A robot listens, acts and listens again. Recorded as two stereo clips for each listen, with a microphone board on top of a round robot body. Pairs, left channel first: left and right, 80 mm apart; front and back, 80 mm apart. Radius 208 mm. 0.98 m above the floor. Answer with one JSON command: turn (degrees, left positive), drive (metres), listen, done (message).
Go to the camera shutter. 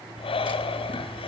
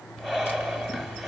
{"listen": true}
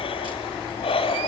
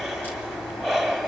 {"listen": true}
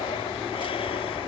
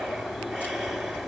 {"done": "I can't make out a camera shutter, only breathing."}